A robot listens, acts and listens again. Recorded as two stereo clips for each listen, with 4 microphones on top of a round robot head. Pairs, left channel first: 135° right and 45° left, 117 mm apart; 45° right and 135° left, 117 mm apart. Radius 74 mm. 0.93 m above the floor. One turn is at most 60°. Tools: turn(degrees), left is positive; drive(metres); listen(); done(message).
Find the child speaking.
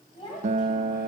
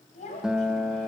turn(degrees=-60)
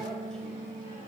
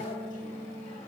turn(degrees=-25)
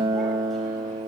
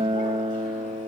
listen()
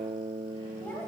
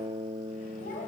turn(degrees=-55)
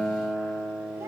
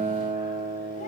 listen()
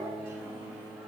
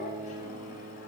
listen()
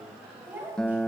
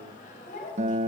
turn(degrees=-25)
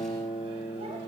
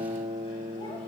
listen()
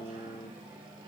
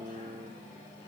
listen()
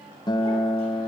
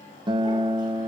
done("Facing where the child speaking came from. I can't hear it now.")